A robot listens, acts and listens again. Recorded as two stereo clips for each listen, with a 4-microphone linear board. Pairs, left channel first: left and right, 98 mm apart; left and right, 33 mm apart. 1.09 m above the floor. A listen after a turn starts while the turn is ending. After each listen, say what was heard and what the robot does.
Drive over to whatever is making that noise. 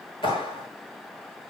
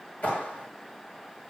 The clap: about 55° left or 125° left. Turn 55° left.
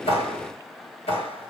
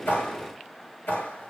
So it is at 70° left. Turn 70° left.
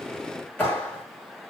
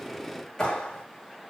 The clap is now 15° left. Turn 15° left.
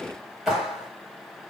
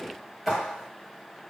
Drive 1.0 m forward.
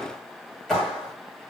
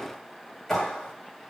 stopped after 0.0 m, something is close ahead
Blocked. The clap is further on, straight ahead.